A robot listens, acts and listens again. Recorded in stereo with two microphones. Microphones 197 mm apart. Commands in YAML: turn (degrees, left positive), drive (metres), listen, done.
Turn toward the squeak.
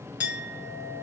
listen: true
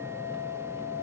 listen: true
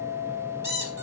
turn: -55
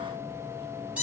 done: "Found it: a squeak, straight ahead."